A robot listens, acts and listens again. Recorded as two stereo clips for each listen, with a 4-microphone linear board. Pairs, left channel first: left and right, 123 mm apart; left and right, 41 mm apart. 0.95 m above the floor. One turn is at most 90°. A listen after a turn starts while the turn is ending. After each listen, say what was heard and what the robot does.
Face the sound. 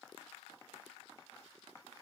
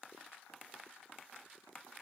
Keep listening.
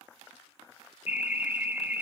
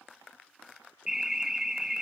The alarm: about 15° right or 165° right. Turn 15° right.
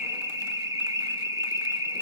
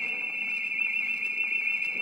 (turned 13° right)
So it is at 150° right. Turn 90° right.
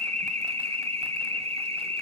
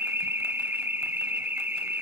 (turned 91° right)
The alarm is now 60° right. Turn 60° right.
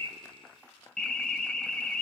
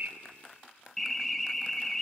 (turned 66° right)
The alarm is now 10° left. Turn 10° left.
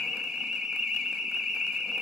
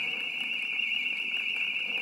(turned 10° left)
Facing the alarm, under 1 m away.